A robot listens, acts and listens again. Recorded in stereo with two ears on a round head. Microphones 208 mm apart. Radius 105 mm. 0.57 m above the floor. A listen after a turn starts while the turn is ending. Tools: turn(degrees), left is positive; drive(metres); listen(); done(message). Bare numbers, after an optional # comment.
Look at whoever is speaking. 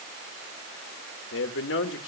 # The man speaking: about 55° left or 125° left.
turn(55)
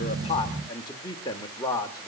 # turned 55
# So it is at 20° left.
turn(20)
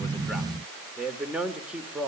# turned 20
done("Found it: a man speaking, straight ahead.")